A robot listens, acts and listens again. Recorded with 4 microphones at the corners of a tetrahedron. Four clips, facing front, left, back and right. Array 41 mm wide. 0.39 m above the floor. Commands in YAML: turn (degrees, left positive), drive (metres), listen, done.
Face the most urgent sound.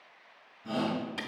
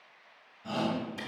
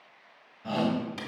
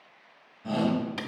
turn: -170
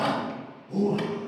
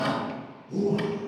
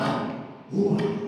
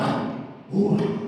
turn: -40
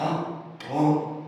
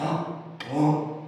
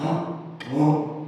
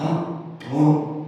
turn: 10
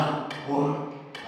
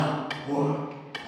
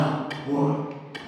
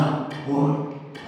done: "Facing the shout, 2 to 4 m away."